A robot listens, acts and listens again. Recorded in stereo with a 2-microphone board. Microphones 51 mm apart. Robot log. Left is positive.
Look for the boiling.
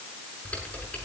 cmd idle
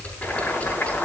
note: The boiling: about 30° left or 150° left.
cmd yaw +30
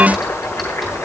note: So it is at 120° left.
cmd yaw +120
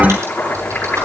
note: The boiling is now 40° left.
cmd yaw +40
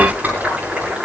note: The boiling is now 20° right.
cmd yaw -20
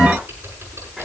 cmd idle
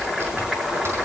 end: Facing the boiling, over 4 m away.